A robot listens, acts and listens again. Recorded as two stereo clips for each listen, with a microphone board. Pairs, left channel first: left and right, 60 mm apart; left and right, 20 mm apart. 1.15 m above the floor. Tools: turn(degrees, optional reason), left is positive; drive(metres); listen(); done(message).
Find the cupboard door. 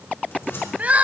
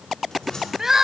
turn(degrees=45, reason="The cupboard door: about 45° left or 135° left.")
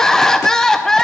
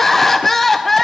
listen()
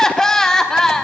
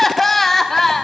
listen()
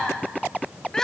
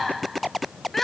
done("I heard a cupboard door, but can't make it out now. It was about straight ahead or 90° left.")